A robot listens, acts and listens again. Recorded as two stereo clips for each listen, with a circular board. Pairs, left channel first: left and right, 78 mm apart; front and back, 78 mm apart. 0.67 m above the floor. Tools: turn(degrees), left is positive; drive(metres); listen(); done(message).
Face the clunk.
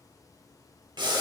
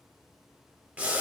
listen()
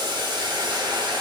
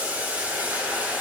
listen()
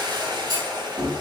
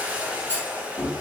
turn(degrees=-60)
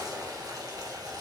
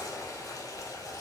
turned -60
done("I heard a clunk from this way, but can't make it out now.")